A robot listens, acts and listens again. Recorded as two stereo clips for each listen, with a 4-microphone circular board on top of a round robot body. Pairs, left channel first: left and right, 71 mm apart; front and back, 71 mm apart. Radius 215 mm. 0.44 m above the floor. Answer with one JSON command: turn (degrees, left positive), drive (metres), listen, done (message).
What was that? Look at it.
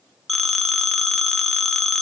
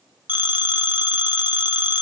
{"done": "Found it: a phone ringing, straight ahead."}